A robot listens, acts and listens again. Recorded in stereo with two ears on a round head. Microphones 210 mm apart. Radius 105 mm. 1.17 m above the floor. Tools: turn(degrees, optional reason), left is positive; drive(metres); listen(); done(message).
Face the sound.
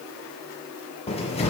turn(degrees=25, reason="The cupboard door: about 25° left or 155° left.")
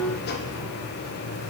turn(degrees=130, reason="So it is at 130° left.")
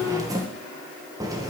turn(degrees=-15, reason="The cupboard door is now 15° right.")
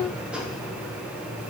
done("Found it: a cupboard door, straight ahead, 1 to 2 m away.")